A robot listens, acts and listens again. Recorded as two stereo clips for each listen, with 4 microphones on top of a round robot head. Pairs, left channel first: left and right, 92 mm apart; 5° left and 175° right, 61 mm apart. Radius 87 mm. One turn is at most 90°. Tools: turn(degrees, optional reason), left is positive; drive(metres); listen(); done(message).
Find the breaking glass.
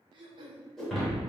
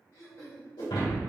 done("Found it: breaking glass, straight ahead, 2 to 4 m away.")